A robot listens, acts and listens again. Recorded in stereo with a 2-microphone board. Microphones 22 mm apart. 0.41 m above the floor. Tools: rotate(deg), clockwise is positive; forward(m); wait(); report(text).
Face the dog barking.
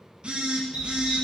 rotate(65)
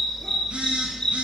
rotate(-25)
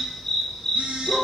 rotate(-30)
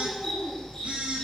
rotate(-20)
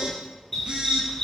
rotate(-20)
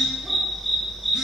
report("Found it: a dog barking, straight ahead, 2 to 4 m away.")